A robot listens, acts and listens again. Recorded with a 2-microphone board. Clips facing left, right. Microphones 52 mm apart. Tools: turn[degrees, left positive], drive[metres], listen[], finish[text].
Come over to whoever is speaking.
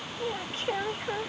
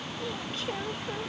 Thought: The woman speaking: about 35° left or 145° left.
Action: turn[35]
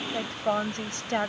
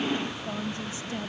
Thought: So it is at 110° left.
Action: turn[110]
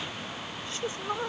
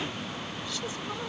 Thought: The woman speaking is now 35° left.
Action: turn[35]
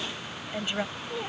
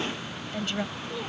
Thought: The woman speaking is now 15° left.
Action: turn[15]
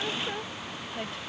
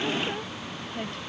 Action: drive[1.0]
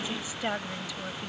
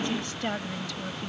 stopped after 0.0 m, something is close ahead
Thought: The woman speaking is now 10° left.
Action: turn[10]
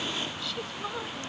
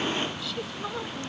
Action: finish[Blocked. The woman speaking is further on, straight ahead.]